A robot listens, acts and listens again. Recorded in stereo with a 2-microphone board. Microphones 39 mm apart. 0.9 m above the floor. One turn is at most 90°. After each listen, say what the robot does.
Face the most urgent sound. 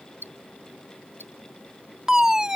Turn 30° right.
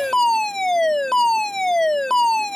Turn 15° left.
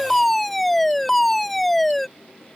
Found it: a fire alarm, straight ahead.